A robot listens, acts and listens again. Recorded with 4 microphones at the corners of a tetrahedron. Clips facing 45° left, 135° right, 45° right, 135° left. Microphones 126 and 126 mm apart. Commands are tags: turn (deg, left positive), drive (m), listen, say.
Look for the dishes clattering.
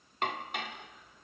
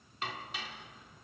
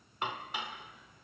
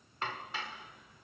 <turn deg="25"/>
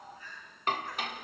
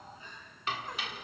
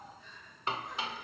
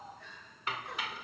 <turn deg="10"/>
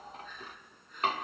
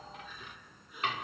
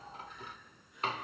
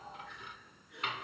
<say>Facing the dishes clattering, under 1 m away.</say>